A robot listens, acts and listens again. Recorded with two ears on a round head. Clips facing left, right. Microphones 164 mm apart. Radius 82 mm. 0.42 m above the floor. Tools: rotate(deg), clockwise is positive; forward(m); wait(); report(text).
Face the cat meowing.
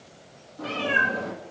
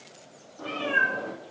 rotate(-25)
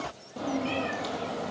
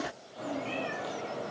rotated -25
rotate(-120)
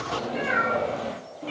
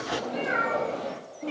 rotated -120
report("Found it: a cat meowing, straight ahead, 2 to 4 m away.")